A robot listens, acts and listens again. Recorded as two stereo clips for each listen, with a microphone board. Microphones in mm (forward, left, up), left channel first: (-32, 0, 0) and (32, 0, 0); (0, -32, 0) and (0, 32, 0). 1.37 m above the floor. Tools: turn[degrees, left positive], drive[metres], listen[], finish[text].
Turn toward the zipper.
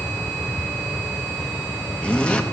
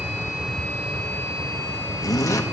Thought: The zipper: 110° right.
Action: turn[-110]
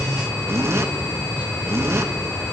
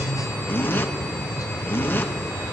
Thought: The zipper is now 40° right.
Action: turn[-40]
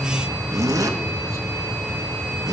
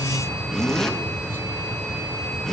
Action: finish[Found it: a zipper, straight ahead.]